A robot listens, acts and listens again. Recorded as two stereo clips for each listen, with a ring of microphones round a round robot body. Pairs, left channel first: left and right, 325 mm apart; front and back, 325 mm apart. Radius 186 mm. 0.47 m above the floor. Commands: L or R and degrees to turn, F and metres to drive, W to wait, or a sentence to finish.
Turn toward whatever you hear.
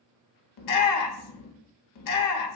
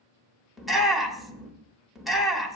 L90
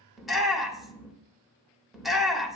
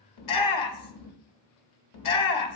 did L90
Found it: a shout, straight ahead, 2 to 4 m away.